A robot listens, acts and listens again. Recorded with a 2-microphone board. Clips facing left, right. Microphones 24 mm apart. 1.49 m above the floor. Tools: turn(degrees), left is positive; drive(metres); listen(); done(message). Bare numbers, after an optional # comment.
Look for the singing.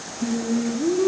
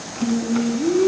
# The singing: about 15° left or 165° left.
turn(15)
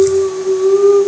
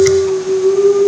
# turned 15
# The singing: about 40° left or 140° left.
turn(40)
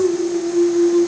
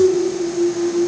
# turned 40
# So it is at 95° left.
turn(95)
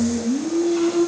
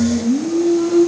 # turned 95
done("Facing the singing.")